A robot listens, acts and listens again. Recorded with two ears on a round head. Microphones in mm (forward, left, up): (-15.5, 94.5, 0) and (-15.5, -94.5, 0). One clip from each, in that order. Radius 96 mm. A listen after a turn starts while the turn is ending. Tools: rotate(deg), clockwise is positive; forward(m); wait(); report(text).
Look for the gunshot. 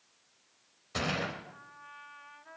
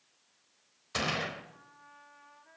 rotate(35)
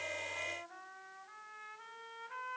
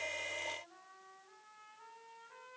wait()
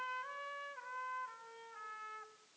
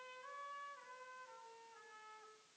report("I heard a gunshot, but can't make it out now. It was about straight ahead or 110° right.")